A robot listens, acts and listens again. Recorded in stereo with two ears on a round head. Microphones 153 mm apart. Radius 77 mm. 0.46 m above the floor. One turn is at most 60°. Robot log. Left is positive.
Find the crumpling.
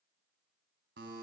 cmd idle
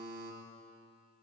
cmd idle
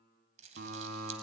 note: The crumpling: about 45° right or 135° right.
cmd yaw -45
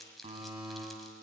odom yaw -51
end: Found it: crumpling, straight ahead.